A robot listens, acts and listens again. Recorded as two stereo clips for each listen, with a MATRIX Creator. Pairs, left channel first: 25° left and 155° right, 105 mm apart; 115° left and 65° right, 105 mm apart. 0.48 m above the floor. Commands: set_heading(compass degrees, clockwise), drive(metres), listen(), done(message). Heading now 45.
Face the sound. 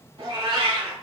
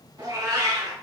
set_heading(160)
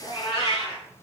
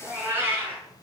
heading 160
done("Found it: a cat meowing, straight ahead, 1 to 2 m away.")